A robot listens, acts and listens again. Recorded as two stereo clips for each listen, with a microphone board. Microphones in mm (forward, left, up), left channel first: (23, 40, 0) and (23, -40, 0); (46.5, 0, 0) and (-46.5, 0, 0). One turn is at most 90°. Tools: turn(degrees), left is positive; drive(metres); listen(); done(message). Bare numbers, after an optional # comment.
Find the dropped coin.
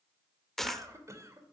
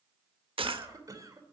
# The dropped coin: 175° left.
turn(90)
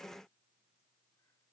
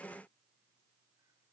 # Nothing new. It was at 85° left.
turn(85)
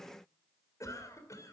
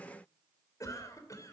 done("Facing where the dropped coin came from. I can't hear it now.")